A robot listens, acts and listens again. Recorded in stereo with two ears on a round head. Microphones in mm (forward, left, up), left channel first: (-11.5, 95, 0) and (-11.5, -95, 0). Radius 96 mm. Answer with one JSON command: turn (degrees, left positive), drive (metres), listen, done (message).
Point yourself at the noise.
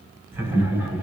{"turn": -30}
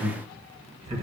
{"turn": -150}
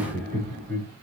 {"done": "Facing the laughter."}